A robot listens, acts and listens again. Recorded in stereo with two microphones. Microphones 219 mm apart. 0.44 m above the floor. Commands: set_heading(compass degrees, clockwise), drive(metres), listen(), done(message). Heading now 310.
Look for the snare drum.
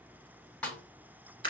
set_heading(280)
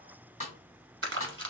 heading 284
set_heading(139)
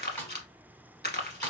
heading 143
done("Facing the snare drum, 1 to 2 m away.")